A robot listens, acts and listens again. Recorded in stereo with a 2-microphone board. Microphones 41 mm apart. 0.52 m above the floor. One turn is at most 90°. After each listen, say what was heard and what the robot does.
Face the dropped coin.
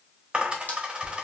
The dropped coin: about 30° right or 150° right. Turn 30° right.
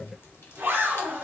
Keep listening.
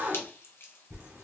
I heard a dropped coin, but can't make it out now. It was about straight ahead or 120° right.